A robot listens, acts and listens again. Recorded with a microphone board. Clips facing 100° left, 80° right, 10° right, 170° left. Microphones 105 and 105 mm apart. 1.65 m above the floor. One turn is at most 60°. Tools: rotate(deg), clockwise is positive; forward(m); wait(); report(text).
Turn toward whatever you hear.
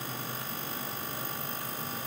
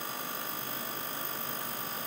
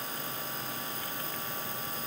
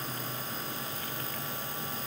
wait()
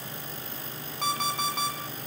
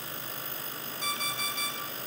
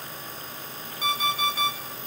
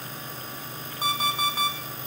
rotate(-60)
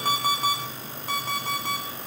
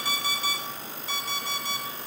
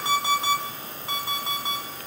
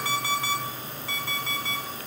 rotate(-60)
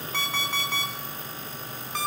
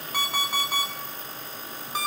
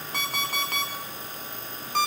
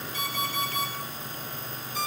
report("Found it: an alarm clock, straight ahead, 2 to 4 m away.")